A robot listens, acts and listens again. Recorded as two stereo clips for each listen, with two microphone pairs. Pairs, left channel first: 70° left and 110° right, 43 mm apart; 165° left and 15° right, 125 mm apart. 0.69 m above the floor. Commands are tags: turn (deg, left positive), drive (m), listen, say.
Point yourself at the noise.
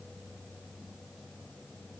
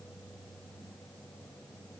<listen/>
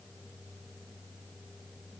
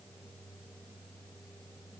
<listen/>
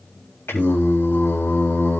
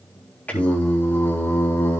<turn deg="95"/>
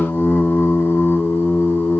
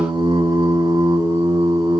<turn deg="40"/>
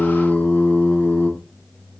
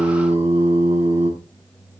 <turn deg="15"/>
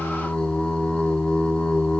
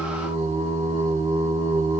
<say>Found it: singing, straight ahead, over 4 m away.</say>